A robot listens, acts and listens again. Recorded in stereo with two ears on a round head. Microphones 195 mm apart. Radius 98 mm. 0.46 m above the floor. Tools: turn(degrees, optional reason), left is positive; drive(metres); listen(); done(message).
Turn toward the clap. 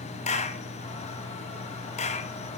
turn(degrees=35, reason="The clap: about 35° left or 145° left.")
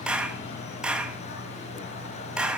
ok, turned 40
done("Found it: a clap, straight ahead.")